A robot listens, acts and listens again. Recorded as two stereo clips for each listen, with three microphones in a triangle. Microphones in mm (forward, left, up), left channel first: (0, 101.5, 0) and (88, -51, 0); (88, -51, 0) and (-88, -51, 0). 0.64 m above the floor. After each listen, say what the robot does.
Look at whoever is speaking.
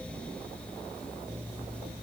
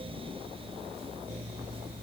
Keep listening.
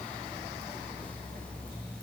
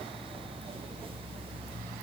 Keep listening.
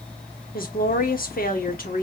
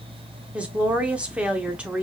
Turn 100° left.
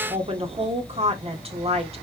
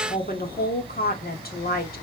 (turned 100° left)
Turn 10° right.
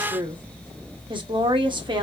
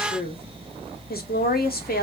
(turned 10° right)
Found it: a woman speaking, straight ahead.